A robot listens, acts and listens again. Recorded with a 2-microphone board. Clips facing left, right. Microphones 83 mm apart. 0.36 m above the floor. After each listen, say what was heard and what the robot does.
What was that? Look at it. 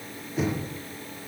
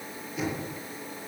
The knocking: about 35° left or 145° left. Turn 35° left.
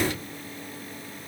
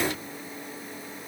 Keep listening.
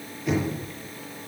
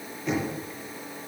Facing the knocking, over 4 m away.